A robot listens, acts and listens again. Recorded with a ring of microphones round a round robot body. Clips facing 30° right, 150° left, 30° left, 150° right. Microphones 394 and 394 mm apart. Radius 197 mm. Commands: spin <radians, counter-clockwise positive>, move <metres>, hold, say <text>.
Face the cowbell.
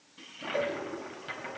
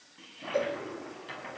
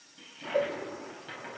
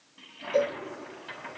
spin -2.18
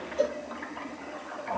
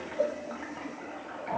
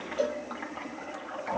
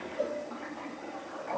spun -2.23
say Facing the cowbell.